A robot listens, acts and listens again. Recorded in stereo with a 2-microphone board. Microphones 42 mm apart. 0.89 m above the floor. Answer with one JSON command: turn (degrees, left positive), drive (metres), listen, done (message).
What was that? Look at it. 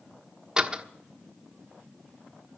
{"turn": -15}
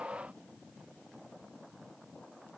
{"listen": true}
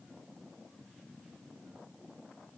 {"done": "I heard a door slam, but can't make it out now. It was about straight ahead or 150° right."}